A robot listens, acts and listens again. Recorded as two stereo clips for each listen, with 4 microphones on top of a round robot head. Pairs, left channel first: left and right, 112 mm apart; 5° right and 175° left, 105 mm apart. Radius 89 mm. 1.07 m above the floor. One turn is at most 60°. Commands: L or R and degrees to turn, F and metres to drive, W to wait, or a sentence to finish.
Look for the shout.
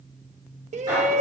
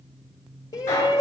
R60
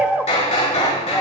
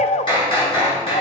R10
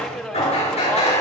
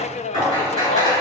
Facing the shout, under 1 m away.